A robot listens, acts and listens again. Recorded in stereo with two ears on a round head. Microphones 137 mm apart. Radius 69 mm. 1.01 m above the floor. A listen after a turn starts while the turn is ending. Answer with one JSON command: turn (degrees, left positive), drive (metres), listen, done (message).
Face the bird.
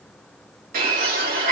{"turn": -65}
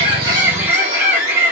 {"turn": -45}
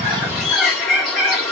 {"done": "Found it: a bird, straight ahead, 2 to 4 m away."}